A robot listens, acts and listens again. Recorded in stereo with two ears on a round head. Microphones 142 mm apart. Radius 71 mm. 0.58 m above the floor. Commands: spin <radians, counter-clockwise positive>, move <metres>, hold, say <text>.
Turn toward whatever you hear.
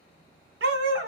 spin -1.57
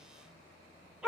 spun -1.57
say Facing the dog barking.